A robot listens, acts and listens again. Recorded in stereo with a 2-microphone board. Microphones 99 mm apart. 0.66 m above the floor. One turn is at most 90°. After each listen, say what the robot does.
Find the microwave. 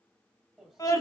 Turn 30° right.
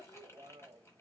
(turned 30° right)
Turn 90° right.
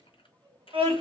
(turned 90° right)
Turn 50° right.
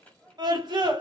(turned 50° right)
Facing the microwave.